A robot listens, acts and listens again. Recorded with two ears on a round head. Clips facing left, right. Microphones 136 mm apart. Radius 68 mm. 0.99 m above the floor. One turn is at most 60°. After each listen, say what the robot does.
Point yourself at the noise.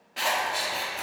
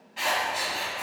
Turn 60° left.
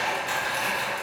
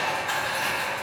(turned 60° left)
Turn 25° left.
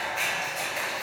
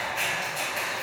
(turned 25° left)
Found it: scissors, straight ahead.